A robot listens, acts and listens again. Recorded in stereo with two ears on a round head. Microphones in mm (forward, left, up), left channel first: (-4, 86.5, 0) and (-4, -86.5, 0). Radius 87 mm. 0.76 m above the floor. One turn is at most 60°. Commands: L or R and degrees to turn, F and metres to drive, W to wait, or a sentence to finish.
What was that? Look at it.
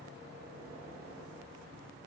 W
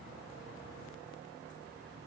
W
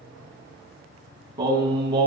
R25
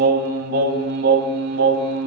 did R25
R60
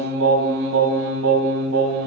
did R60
R60
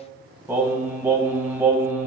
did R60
R10
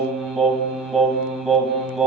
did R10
Found it: singing, straight ahead, 2 to 4 m away.